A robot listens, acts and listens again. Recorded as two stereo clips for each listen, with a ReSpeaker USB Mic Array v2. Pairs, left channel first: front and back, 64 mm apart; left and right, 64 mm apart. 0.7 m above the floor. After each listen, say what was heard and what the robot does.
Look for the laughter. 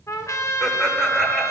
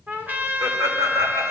The laughter: 85° right. Turn 85° right.
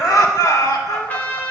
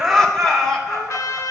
Found it: laughter, straight ahead.